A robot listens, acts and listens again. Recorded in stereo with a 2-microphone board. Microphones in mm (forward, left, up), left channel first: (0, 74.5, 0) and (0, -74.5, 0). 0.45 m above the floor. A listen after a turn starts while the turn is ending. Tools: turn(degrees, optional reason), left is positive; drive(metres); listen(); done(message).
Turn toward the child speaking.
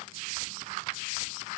listen()
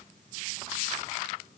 listen()
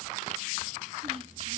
turn(degrees=-40, reason="The child speaking: about 40° right or 140° right.")
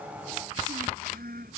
turn(degrees=-95, reason="So it is at 95° right.")
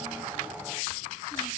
listen()
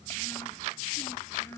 turn(degrees=15, reason="The child speaking is now 15° left.")
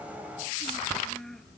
done("Found it: a child speaking, straight ahead.")